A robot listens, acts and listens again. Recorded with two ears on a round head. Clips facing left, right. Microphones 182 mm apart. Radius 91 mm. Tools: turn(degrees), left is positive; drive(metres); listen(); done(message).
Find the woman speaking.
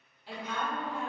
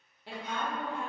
turn(degrees=-50)
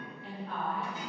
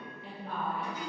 turn(degrees=-70)
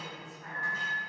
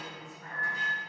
done("Found it: a woman speaking, straight ahead, under 1 m away.")